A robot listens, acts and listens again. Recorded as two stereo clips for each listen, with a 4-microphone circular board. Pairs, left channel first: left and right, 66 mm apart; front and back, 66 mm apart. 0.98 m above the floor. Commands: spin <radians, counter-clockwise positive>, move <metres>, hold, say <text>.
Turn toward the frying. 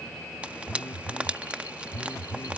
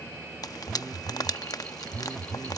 spin -0.35
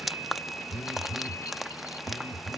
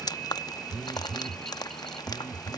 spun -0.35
say Facing the frying.